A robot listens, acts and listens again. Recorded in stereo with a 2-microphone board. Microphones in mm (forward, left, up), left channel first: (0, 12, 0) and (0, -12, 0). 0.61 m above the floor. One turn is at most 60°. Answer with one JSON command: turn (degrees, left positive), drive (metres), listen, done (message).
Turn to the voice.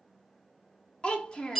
{"turn": 35}
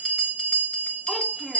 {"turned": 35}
{"listen": true}
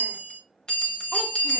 {"listen": true}
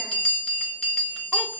{"done": "I heard a child speaking, but can't make it out now. It was about straight ahead or 110° left."}